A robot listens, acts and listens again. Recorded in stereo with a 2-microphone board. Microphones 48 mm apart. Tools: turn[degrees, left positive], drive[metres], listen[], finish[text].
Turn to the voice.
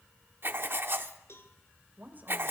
Thought: The woman speaking: about 35° right or 145° right.
Action: turn[-35]
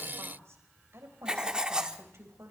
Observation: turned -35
Thought: So it is at 115° right.
Action: turn[-115]
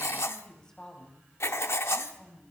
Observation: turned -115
Thought: The woman speaking is now 15° left.
Action: turn[15]
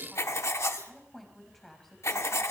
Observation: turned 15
Action: finish[Found it: a woman speaking, straight ahead, over 4 m away.]